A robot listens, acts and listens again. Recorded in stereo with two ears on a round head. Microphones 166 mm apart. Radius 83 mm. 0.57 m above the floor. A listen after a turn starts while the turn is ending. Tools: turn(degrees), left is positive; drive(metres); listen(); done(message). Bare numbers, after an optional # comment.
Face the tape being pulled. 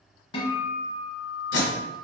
# The tape being pulled: about 70° left or 110° left.
turn(70)
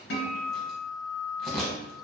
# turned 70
done("Found it: tape being pulled, straight ahead, 1 to 2 m away.")